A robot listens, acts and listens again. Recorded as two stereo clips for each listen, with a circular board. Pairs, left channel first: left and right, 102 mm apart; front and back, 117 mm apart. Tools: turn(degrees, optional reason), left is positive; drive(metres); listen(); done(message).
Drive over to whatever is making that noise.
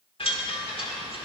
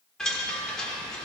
turn(degrees=85, reason="The chime: 85° left.")
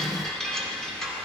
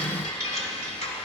drive(metres=1.0)
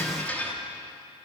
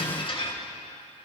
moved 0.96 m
turn(degrees=20, reason="The chime is now 20° left.")
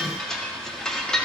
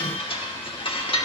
drive(metres=1.0)
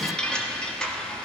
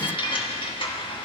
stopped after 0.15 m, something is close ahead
turn(degrees=10, reason="The chime is now 10° left.")
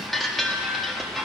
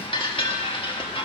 done("I am next to the chime.")